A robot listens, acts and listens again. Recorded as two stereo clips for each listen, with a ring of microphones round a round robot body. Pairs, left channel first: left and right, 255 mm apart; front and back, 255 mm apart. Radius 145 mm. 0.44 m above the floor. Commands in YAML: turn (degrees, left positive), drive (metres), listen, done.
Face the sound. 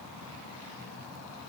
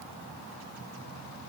listen: true
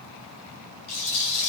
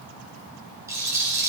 turn: 100
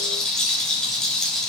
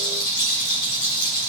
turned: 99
done: "Found it: a rattle, straight ahead, 2 to 4 m away."